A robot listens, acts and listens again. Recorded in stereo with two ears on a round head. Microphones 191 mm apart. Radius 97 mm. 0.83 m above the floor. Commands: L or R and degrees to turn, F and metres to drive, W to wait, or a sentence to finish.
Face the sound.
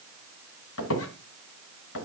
L75
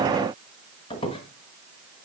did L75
L25
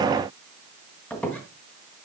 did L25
Facing the squeak, 1 to 2 m away.